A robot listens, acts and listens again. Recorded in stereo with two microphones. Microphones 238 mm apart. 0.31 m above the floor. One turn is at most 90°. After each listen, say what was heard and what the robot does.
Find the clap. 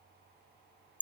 Keep listening.
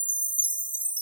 Keep listening.
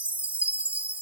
I can't make out a clap, only a chime.